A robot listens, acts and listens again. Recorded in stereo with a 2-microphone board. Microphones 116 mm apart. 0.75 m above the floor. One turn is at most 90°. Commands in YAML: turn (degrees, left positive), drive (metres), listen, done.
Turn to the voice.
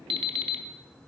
listen: true
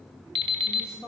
turn: 30
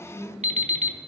turn: 90
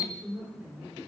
turn: -20
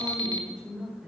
turn: -10
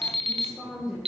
done: "Found it: a woman speaking, straight ahead."